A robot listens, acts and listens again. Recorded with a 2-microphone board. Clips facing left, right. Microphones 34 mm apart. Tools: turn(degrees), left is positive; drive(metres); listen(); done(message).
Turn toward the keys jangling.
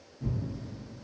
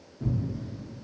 listen()
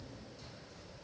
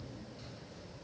listen()
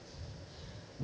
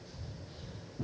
done("I can't make out keys jangling to turn to.")